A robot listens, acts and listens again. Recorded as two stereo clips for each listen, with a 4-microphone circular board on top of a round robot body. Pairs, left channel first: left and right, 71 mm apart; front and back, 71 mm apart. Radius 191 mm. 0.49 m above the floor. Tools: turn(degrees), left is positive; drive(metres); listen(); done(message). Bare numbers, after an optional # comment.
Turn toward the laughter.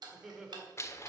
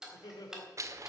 # The laughter: 10° right.
turn(-10)
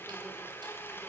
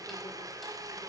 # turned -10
listen()
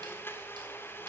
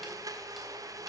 listen()
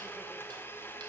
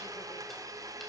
done("Facing where the laughter came from. I can't hear it now.")